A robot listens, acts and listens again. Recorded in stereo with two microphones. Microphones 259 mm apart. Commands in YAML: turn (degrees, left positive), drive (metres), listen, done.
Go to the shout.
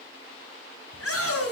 turn: 60
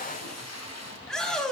drive: 1.0
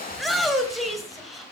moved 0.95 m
drive: 1.0
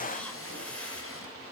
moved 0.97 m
listen: true
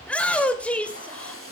drive: 1.0
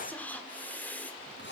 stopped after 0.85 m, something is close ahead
listen: true
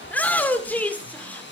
turn: 10
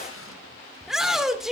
done: "I am next to the shout."